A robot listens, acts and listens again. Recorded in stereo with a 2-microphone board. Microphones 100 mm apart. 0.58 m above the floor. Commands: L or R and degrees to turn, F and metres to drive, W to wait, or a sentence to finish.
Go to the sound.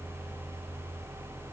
W
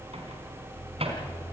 R90
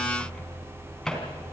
F1.0
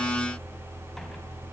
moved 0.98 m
W
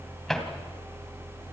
F1.0
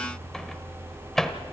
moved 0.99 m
F1.0
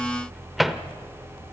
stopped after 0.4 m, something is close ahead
I am next to the microwave.